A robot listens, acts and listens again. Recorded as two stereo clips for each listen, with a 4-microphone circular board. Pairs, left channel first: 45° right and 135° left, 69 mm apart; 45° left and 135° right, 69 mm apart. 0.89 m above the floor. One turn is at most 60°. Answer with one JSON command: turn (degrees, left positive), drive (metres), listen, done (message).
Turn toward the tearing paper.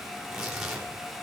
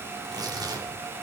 {"turn": -60}
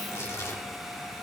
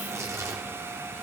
{"turn": -60}
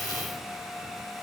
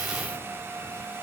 {"turn": -30}
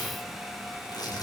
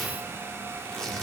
{"turn": -35}
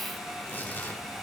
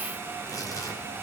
{"turn": 25}
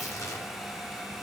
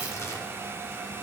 {"done": "Facing the tearing paper."}